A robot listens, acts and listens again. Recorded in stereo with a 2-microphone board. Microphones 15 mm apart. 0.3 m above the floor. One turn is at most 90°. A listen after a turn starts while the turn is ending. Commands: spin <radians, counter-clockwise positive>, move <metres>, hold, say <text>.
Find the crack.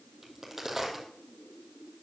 spin -0.35
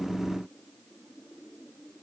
hold
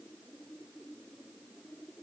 say I heard a crack, but can't make it out now. It was about straight ahead or 140° right.